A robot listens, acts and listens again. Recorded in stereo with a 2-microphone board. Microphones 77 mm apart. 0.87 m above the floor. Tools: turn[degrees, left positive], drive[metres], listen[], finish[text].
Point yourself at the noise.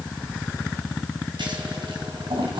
Action: turn[-90]
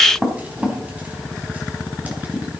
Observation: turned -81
Thought: So it is at 20° right.
Action: turn[-20]
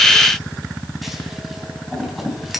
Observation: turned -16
Action: finish[Facing the scissors, 2 to 4 m away.]